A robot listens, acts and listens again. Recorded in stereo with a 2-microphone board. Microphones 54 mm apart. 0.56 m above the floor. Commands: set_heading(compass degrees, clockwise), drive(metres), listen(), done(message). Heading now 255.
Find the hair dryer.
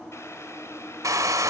set_heading(345)
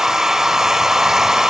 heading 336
set_heading(346)
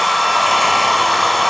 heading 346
done("Facing the hair dryer, under 1 m away.")